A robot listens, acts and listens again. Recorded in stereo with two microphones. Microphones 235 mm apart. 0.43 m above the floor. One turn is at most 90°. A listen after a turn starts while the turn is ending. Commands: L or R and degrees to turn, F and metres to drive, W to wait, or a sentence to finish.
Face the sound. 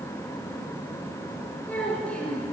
L30
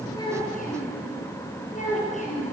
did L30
L90
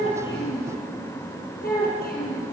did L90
L40
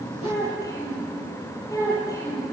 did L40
L15
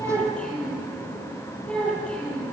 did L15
Facing the child speaking.